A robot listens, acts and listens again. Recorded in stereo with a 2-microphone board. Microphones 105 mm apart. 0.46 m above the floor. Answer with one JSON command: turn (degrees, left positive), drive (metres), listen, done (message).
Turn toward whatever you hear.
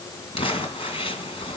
{"turn": 65}
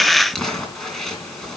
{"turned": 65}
{"done": "Facing the crumpling, 2 to 4 m away."}